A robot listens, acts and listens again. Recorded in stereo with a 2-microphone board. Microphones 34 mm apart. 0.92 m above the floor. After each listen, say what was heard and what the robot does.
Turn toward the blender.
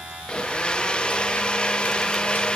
The blender: about 25° left or 155° left. Turn 25° left.
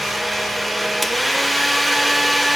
Facing the blender.